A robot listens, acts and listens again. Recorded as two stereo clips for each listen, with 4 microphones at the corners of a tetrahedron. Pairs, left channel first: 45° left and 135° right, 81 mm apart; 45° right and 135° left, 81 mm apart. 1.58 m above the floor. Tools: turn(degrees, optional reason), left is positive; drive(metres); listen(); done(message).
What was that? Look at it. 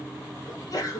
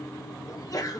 done("Facing the sneeze.")